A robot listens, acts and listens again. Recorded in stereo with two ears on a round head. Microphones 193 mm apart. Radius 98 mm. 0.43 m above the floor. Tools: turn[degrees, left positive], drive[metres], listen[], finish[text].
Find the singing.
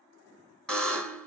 Action: listen[]
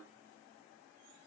Action: listen[]
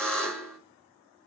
Action: finish[I can't make out singing, only a buzzer.]